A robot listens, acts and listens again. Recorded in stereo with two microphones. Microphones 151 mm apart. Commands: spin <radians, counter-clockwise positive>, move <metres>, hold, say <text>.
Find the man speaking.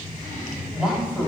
spin -0.52
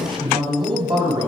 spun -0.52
spin -2.53
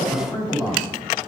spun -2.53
spin 0.52
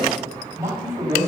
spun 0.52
spin -0.35
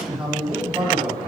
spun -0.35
say Facing the man speaking.